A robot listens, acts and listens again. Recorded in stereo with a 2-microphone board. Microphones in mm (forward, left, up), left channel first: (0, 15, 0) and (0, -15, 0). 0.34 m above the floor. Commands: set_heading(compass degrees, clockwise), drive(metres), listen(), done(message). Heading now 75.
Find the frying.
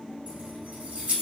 listen()
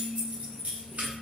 listen()
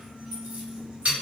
done("I can't make out frying to turn to.")